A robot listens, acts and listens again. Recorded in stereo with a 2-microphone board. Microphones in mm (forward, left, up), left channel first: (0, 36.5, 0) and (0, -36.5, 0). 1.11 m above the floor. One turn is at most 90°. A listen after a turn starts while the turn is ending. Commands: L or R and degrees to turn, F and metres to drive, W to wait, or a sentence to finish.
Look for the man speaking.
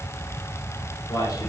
L60
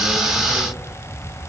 W
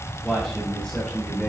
L15
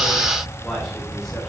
W
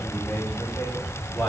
Found it: a man speaking, straight ahead, over 4 m away.